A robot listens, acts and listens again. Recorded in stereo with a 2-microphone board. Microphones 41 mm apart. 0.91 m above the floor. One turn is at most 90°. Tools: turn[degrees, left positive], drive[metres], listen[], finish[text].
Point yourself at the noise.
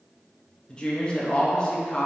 Thought: The woman speaking: about 20° left or 160° left.
Action: turn[20]
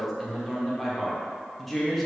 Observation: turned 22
Action: finish[Found it: a woman speaking, straight ahead.]